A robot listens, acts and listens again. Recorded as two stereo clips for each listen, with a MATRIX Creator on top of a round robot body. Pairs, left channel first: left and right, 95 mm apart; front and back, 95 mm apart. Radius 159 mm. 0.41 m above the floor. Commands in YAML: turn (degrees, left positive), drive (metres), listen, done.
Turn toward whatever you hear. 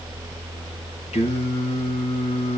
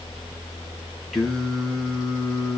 turn: 90
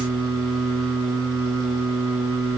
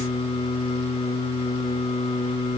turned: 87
done: "Found it: singing, straight ahead."